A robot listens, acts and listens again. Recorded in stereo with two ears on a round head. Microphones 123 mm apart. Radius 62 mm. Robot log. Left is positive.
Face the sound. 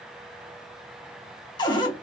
note: The cupboard door: about 35° left or 145° left.
cmd yaw +35
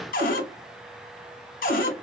note: So it is at 110° left.
cmd yaw +110
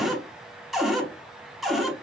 end: Found it: a cupboard door, straight ahead.